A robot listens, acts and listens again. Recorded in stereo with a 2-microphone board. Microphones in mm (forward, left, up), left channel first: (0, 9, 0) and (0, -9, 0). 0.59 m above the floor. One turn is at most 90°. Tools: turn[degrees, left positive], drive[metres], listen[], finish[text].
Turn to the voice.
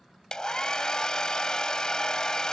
Action: listen[]
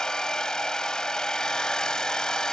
Action: listen[]
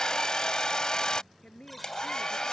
Thought: The woman speaking: about 65° left or 115° left.
Action: turn[65]
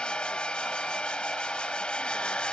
Action: listen[]
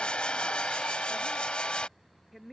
Action: finish[Facing the woman speaking.]